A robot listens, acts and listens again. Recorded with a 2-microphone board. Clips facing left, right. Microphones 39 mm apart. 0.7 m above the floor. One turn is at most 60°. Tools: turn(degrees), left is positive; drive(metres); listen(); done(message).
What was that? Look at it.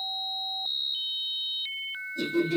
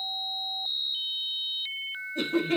turn(degrees=-55)
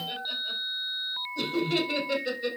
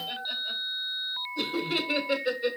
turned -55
turn(degrees=-15)
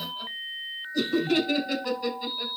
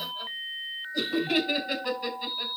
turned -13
turn(degrees=-15)
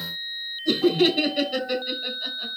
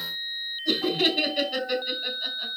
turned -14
done("Found it: laughter, straight ahead, 2 to 4 m away.")